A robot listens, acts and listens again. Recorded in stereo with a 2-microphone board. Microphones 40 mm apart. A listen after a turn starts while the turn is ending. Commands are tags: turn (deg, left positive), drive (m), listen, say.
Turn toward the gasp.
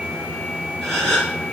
<turn deg="30"/>
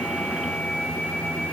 <listen/>
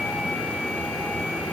<say>I heard a gasp, but can't make it out now. It was about 20° right or 140° left.</say>